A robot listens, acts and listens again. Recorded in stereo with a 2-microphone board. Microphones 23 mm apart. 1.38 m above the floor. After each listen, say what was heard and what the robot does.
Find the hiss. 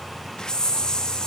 The hiss: about 30° left or 150° left. Turn 30° left.
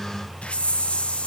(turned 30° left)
So it is at 120° left. Turn 120° left.
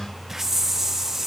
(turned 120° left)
The hiss is now 10° right. Turn 10° right.
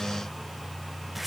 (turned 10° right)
Keep listening.
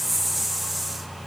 Facing the hiss, 1 to 2 m away.